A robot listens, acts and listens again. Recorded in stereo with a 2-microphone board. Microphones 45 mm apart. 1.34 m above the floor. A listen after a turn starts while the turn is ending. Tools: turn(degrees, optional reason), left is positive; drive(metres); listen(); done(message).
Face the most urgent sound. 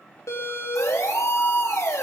turn(degrees=90)
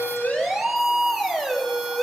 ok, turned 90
done("Found it: a siren, straight ahead, 2 to 4 m away.")